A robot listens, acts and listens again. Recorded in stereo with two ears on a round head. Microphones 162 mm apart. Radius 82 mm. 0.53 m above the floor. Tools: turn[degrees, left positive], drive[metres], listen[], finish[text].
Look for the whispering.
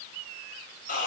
Action: listen[]
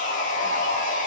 Action: listen[]
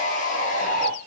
Action: finish[I can't make out whispering to turn to.]